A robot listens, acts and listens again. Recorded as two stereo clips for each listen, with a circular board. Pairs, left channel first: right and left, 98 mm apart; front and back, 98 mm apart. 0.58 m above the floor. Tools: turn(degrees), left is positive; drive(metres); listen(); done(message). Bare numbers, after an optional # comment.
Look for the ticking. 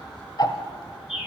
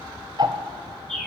# The ticking: 135° right.
turn(-135)
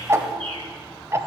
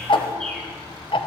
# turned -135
# The ticking is now 30° left.
turn(30)
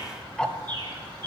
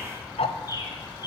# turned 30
done("Found it: ticking, straight ahead.")